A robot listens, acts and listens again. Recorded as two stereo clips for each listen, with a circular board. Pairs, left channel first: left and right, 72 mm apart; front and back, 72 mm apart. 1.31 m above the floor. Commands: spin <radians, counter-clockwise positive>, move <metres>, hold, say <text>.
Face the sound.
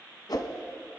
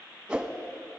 spin 1.75
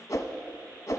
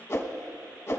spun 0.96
spin 0.79
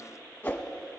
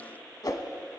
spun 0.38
spin 0.44
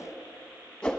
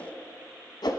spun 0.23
spin 0.17
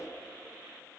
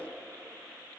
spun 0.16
hold
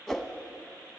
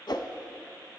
say Facing the whoosh.